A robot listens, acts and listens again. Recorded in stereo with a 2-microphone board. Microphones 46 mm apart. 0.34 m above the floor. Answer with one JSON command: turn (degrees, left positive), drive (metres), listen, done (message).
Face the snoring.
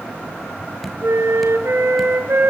{"listen": true}
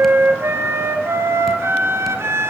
{"listen": true}
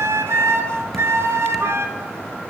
{"done": "I can't make out snoring to turn to."}